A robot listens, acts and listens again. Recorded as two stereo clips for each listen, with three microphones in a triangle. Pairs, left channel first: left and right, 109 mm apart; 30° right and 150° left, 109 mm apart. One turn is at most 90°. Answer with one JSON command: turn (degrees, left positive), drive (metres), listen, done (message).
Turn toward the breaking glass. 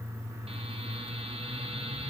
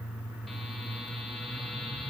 {"listen": true}
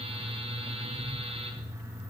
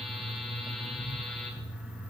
{"listen": true}
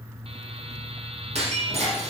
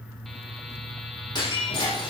{"turn": -80}
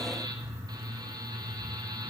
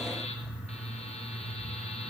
{"done": "I heard breaking glass from this way, but can't make it out now."}